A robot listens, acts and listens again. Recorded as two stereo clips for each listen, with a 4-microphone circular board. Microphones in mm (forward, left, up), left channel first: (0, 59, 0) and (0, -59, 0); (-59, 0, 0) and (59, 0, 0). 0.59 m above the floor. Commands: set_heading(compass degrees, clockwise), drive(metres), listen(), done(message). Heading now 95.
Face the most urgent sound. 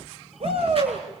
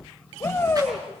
set_heading(210)
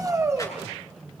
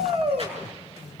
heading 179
set_heading(209)
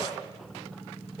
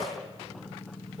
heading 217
set_heading(207)
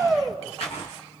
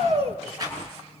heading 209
done("Found it: a shout, straight ahead.")